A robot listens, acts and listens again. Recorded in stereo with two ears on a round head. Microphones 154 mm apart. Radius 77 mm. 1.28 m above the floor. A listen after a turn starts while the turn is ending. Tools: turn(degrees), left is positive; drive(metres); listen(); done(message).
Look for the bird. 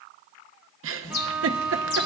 turn(degrees=65)
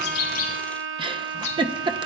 turn(degrees=45)
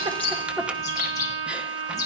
turn(degrees=20)
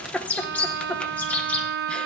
turn(degrees=10)
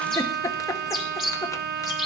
done("Facing the bird, 2 to 4 m away.")